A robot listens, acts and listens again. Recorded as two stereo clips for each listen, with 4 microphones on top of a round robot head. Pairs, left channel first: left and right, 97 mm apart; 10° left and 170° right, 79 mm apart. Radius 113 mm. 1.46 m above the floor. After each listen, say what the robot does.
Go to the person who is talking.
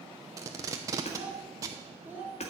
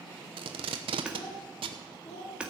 Turn 20° right.
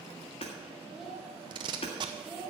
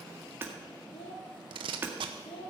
Drive 1.0 m forward.
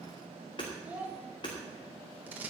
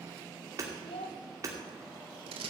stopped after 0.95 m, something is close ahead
Turn 15° right.
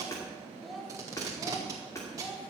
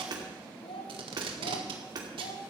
Arrived at the child speaking, straight ahead.